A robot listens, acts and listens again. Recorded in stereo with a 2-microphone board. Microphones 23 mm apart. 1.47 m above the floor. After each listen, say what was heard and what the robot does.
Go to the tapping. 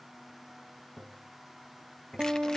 Turn 30° right.
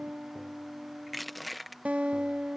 Keep listening.
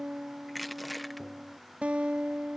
Keep listening.
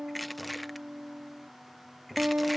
So it is at 20° left. Turn 20° left.
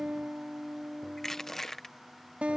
Keep listening.
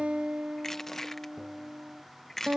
Keep listening.
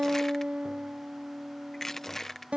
I heard tapping from this way, but can't make it out now. I did not reach it.